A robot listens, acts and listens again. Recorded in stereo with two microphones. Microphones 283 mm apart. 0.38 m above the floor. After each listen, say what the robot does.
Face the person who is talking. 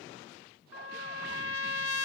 Keep listening.
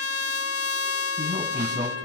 Turn 15° right.
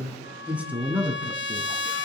Turn 30° right.
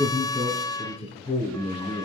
Turn 20° left.
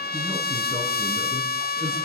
Keep listening.
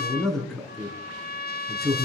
Found it: a man speaking, straight ahead, over 4 m away.